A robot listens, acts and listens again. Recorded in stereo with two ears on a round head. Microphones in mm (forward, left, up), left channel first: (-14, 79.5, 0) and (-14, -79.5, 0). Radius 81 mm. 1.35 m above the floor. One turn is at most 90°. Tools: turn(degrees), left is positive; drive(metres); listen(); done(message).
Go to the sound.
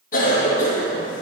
turn(degrees=50)
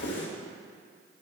turn(degrees=80)
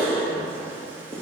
turn(degrees=-15)
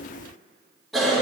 drive(metres=1.0)
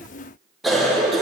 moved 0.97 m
drive(metres=1.0)
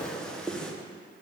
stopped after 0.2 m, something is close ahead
done("I am next to the cough.")